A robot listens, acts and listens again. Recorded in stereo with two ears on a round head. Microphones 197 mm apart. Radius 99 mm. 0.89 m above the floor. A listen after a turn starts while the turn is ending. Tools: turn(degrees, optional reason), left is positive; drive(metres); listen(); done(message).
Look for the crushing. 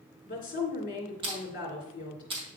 turn(degrees=-25, reason="The crushing: about 25° right or 155° right.")
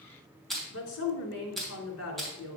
done("Found it: crushing, straight ahead, 2 to 4 m away.")